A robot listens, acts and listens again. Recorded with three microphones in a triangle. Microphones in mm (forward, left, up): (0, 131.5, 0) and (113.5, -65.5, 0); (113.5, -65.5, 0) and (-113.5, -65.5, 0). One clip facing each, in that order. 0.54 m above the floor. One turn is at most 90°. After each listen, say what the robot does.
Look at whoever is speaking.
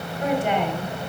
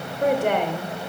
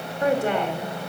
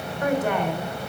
Turn 60° right.
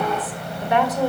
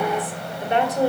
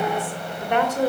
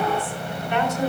Found it: a woman speaking, straight ahead.